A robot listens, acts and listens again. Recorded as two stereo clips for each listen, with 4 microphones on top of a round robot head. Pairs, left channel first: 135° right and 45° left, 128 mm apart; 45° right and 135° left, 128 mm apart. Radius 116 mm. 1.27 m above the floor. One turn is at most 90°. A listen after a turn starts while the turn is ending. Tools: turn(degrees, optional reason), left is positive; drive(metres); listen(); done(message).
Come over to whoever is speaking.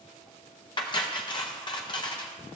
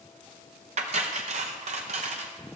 listen()
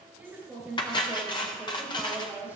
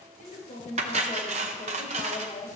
turn(degrees=-25, reason="The woman speaking: 25° right.")
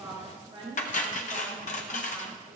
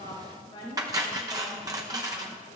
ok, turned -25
drive(metres=1.0)
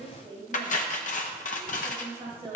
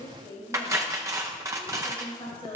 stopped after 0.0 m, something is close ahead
done("Something is in my way. I am facing the woman speaking but have not reached it.")